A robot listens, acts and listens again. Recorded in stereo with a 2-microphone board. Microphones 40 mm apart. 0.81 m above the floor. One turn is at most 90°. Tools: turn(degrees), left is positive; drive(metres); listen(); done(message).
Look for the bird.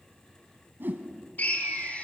turn(degrees=-75)
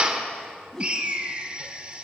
turn(degrees=-35)
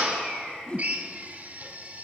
listen()
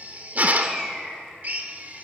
turn(degrees=-15)
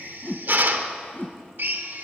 listen()
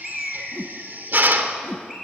done("Facing the bird, over 4 m away.")